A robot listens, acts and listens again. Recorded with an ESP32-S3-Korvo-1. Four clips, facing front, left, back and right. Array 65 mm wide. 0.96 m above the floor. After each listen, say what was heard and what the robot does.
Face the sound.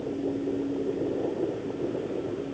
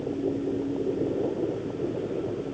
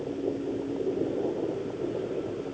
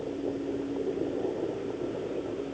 Keep listening.
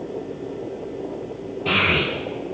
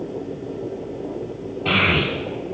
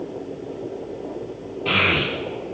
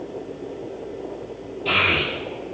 The child speaking: 95° left. Turn 95° left.
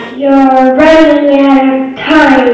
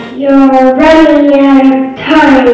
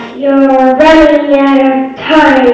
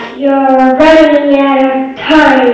Facing the child speaking, 1 to 2 m away.